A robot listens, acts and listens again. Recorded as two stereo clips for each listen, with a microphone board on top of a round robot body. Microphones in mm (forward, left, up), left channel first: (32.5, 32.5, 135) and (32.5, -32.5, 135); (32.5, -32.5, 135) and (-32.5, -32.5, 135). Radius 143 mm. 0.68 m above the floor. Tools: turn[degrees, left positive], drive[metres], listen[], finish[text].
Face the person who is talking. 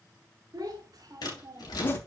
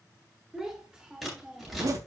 Thought: The child speaking: 105° right.
Action: turn[-105]
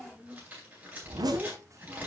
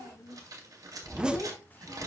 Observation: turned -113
Thought: The child speaking is now 55° right.
Action: turn[-55]
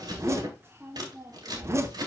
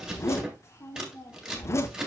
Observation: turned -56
Thought: The child speaking is now 40° right.
Action: turn[-40]
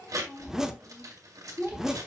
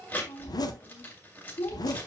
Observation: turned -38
Action: finish[Facing the child speaking.]